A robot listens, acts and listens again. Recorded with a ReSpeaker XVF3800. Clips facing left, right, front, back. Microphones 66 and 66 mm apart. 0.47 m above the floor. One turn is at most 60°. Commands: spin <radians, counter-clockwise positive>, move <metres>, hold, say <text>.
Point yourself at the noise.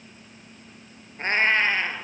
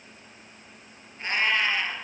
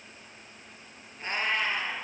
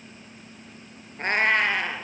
spin 1.05
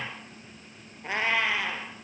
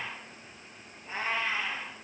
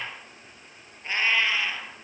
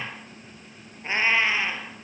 spin 1.05
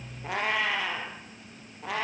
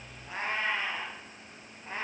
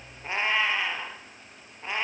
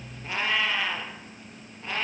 spin 1.05
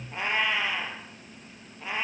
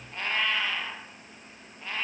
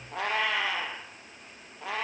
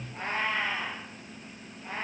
spin 0.26
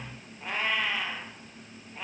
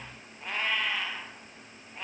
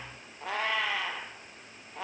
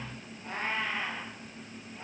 say Found it: a cat meowing, straight ahead.